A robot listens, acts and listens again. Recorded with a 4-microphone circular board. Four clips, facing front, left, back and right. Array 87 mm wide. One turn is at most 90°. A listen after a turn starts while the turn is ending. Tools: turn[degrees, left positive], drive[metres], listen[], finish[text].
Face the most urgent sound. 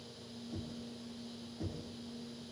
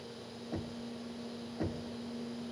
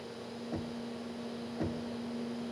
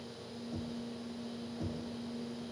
Action: listen[]
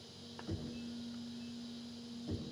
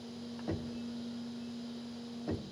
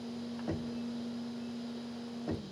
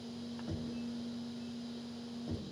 Action: listen[]
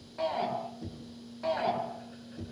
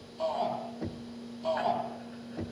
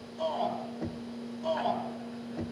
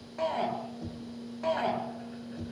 Thought: The shout: 65° right.
Action: turn[-65]
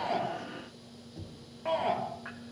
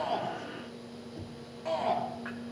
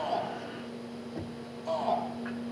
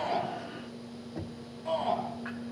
Thought: The shout is now 15° left.
Action: turn[15]
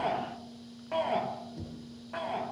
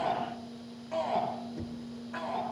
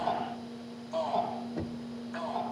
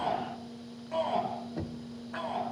Action: finish[Facing the shout, over 4 m away.]